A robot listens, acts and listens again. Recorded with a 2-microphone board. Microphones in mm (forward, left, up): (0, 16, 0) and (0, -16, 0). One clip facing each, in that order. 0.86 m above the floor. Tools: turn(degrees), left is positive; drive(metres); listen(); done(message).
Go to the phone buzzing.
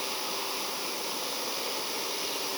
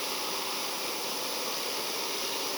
listen()
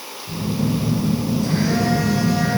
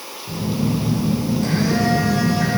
turn(degrees=-60)
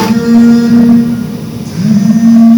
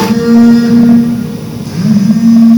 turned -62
turn(degrees=-55)
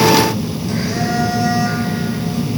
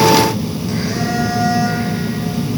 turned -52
drive(metres=1.0)
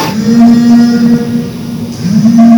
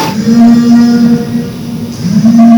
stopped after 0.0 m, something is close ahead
done("Something is in my way. I am facing the phone buzzing but have not reached it.")